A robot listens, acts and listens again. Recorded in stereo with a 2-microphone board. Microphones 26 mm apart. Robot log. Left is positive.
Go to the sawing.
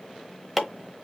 cmd idle
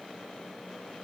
cmd idle
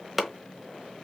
end: I can't make out sawing to turn to.